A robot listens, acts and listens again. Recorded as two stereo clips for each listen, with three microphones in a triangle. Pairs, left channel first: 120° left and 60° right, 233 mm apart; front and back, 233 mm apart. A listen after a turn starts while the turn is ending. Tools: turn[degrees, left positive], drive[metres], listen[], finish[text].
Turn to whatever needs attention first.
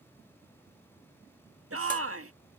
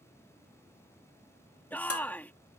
Thought: The shout: 85° right.
Action: turn[-85]
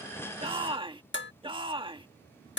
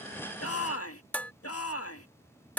Thought: The shout is now 10° left.
Action: turn[10]
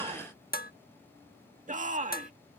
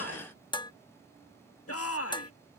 Action: finish[Found it: a shout, straight ahead.]